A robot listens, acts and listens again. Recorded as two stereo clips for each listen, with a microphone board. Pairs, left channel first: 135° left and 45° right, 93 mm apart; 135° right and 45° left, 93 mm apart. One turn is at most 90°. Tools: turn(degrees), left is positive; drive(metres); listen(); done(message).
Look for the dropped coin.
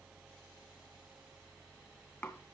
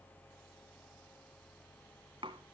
listen()
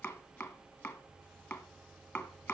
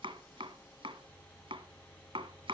listen()
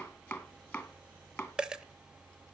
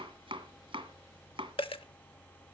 turn(degrees=-90)
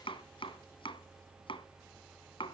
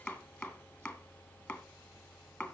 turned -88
turn(degrees=-40)
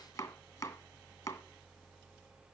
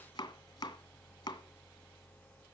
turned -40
done("Facing where the dropped coin came from. I can't hear it now.")